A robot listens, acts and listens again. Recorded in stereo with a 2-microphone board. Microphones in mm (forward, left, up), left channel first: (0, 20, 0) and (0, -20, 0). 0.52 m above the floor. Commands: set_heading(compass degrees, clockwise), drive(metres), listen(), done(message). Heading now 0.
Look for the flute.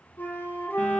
set_heading(310)
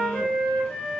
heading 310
done("Facing the flute.")